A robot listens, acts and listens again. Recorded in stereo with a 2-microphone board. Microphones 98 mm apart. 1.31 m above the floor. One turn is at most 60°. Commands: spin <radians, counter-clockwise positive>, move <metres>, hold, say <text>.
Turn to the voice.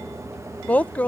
spin 0.52
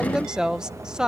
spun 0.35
say Facing the woman speaking.